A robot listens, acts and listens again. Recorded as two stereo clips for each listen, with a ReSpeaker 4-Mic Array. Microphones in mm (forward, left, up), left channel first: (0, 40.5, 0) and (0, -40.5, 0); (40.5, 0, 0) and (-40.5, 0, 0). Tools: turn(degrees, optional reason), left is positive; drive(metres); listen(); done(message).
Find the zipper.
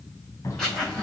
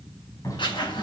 turn(degrees=10, reason="The zipper: 10° left.")
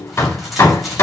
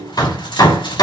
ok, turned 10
listen()
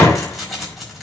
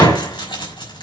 done("Found it: a zipper, straight ahead, over 4 m away.")